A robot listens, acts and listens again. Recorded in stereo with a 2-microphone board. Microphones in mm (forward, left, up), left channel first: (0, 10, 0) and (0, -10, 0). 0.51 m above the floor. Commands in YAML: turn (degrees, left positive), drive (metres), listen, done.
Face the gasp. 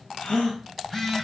turn: 90
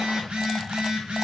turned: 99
turn: -10
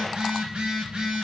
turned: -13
done: "I heard a gasp from this way, but can't make it out now."